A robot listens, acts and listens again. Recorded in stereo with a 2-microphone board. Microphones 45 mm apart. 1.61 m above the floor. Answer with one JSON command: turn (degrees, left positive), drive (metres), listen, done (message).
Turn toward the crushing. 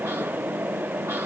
{"listen": true}
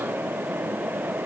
{"listen": true}
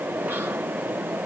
{"done": "I can't make out crushing."}